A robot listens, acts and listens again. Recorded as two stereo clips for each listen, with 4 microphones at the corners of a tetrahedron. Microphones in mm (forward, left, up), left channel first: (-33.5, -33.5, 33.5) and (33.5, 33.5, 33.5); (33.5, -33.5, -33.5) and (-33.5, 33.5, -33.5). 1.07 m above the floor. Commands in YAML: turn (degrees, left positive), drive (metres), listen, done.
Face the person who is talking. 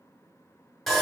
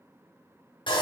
listen: true
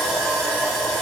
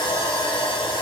listen: true
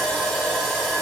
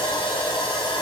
done: "I can't make out anyone speaking, only sawing."